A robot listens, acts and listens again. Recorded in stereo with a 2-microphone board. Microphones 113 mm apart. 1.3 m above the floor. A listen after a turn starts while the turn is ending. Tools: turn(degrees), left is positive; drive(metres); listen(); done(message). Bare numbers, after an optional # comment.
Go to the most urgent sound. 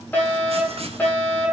turn(30)
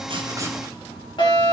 # So it is at 135° left.
turn(135)
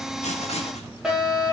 drive(1.0)
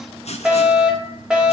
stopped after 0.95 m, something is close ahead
# The fire alarm is now 10° right.
turn(-10)
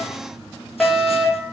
done("Blocked. The fire alarm is further on, straight ahead.")